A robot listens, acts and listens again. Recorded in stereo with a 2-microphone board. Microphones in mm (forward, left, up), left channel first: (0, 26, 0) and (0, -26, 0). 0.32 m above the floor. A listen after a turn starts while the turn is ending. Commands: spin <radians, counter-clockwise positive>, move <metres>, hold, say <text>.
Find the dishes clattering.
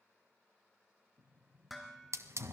spin 0.52
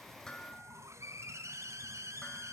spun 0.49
hold
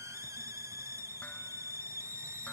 hold
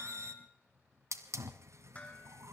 spin 2.71
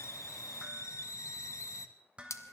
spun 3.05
spin -0.44
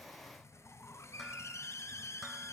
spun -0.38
hold
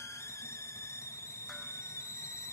hold
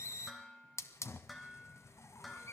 say Found it: dishes clattering, straight ahead, 2 to 4 m away.